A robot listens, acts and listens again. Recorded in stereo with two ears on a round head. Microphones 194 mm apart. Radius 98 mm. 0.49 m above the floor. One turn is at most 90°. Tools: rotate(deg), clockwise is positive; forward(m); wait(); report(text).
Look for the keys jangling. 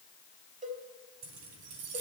rotate(90)
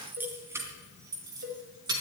rotate(20)
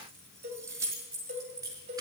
rotate(15)
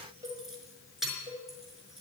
report("Found it: keys jangling, straight ahead.")